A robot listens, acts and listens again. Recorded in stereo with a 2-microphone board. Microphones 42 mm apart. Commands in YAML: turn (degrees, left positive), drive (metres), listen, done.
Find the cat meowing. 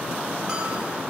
listen: true
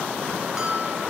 listen: true
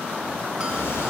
turn: 90
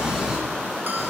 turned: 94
turn: -15
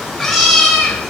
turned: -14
done: "Found it: a cat meowing, straight ahead."